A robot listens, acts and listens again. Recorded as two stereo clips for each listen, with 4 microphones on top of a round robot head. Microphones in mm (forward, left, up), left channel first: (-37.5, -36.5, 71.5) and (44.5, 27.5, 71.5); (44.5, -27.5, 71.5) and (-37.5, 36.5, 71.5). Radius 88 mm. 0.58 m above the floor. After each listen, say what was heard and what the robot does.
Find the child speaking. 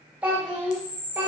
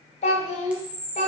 The child speaking: 35° right. Turn 35° right.
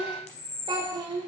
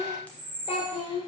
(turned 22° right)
The child speaking is now 10° right. Turn 10° right.
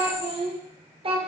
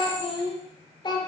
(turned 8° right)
The child speaking is now 10° left. Turn 10° left.
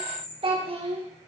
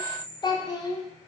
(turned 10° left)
The child speaking is now 15° left. Turn 15° left.
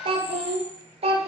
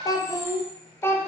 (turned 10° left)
The child speaking is now 30° left. Turn 30° left.
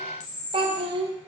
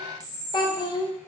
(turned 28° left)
Found it: a child speaking, straight ahead.